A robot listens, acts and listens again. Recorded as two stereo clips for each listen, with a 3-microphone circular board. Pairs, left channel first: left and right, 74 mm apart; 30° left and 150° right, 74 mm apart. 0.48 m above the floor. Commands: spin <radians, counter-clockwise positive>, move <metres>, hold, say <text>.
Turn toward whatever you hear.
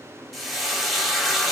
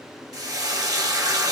spin 3.14
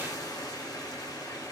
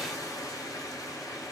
spin 1.05
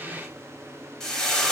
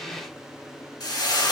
spin 0.17
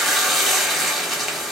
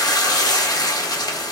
say Found it: frying, straight ahead, under 1 m away.